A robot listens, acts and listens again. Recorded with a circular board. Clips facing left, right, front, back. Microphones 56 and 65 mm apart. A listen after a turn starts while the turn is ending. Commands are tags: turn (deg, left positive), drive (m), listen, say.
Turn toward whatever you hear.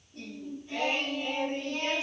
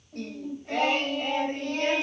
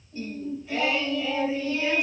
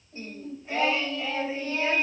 <turn deg="-125"/>
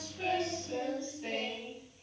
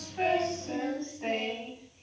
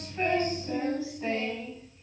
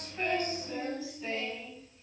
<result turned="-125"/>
<turn deg="-50"/>
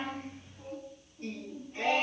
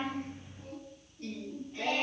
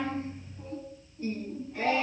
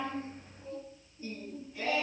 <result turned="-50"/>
<turn deg="25"/>
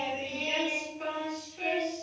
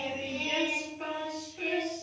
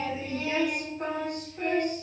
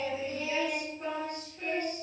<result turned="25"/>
<say>Found it: singing, straight ahead, over 4 m away.</say>